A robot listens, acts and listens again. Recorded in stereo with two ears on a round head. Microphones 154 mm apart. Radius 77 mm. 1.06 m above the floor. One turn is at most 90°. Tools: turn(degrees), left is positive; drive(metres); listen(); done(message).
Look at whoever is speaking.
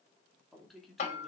turn(degrees=30)
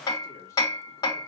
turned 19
listen()
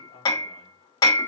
turn(degrees=90)
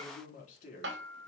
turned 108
turn(degrees=50)
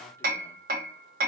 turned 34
turn(degrees=15)
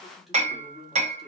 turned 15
done("Facing the man speaking, 2 to 4 m away.")